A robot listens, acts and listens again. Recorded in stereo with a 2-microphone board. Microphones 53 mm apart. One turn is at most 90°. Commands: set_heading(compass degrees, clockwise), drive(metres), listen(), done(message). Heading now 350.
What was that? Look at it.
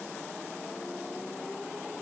listen()
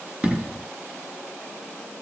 set_heading(10)
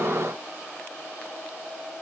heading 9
listen()
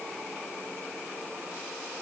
done("I heard an explosion, but can't make it out now. It was about straight ahead or 140° right.")